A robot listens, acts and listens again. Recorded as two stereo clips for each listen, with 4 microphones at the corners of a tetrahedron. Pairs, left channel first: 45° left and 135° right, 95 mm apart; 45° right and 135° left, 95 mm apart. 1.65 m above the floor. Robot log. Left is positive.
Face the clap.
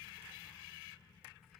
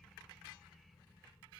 cmd idle
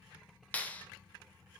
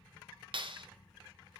note: The clap: 115° left.
cmd yaw +115
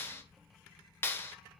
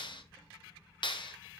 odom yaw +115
note: The clap is now 15° right.
cmd yaw -15
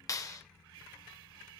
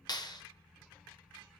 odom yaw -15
end: Found it: a clap, straight ahead.